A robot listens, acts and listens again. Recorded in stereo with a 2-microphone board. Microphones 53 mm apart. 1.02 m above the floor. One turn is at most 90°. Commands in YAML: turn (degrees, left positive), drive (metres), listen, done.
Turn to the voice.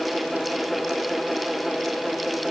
listen: true
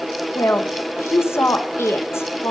turn: 55
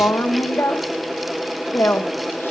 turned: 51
turn: 60
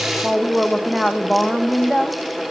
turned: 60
done: "Facing the woman speaking."